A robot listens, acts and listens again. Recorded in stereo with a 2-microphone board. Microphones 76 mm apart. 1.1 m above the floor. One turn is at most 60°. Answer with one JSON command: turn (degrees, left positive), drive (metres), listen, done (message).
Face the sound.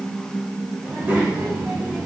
{"turn": -20}
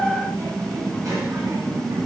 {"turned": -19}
{"turn": -60}
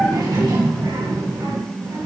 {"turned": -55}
{"turn": -60}
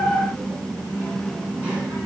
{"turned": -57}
{"turn": -20}
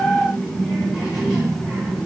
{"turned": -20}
{"done": "Found it: a child speaking, straight ahead."}